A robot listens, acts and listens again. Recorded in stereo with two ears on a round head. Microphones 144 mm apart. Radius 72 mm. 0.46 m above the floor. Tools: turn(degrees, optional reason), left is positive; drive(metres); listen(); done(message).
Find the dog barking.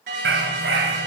turn(degrees=-90)
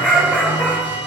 turn(degrees=10, reason="So it is at 10° left.")
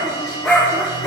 turn(degrees=15, reason="The dog barking is now 15° left.")
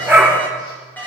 done("Facing the dog barking, over 4 m away.")